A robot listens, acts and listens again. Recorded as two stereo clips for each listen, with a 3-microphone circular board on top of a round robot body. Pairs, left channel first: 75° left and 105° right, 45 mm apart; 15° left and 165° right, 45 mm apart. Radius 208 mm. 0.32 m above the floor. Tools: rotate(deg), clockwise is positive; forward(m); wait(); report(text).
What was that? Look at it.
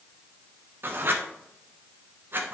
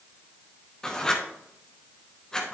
rotate(65)
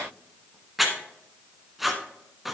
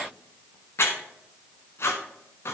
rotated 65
rotate(20)
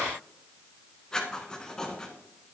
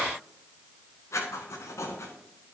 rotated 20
report("Facing the writing.")